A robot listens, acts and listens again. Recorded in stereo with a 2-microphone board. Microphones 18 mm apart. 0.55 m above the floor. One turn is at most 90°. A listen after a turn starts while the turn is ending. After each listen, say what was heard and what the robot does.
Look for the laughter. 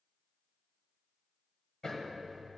Keep listening.
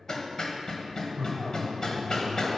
The laughter: about 60° left or 120° left. Turn 60° left.
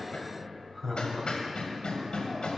So it is at 20° left. Turn 20° left.
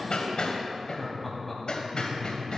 The laughter is now 15° left. Turn 15° left.
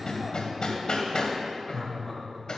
Found it: laughter, straight ahead.